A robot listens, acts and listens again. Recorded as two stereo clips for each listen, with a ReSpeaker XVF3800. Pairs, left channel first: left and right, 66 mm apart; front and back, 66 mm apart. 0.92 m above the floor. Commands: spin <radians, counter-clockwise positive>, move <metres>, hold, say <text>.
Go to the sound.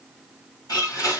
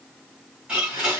spin 1.92
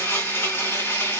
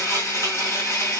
spin 0.70
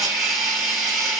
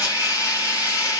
move 1.0
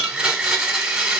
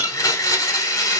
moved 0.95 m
spin -0.26
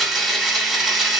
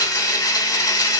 move 1.0
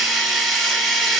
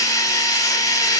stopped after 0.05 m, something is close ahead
say I am next to the blender.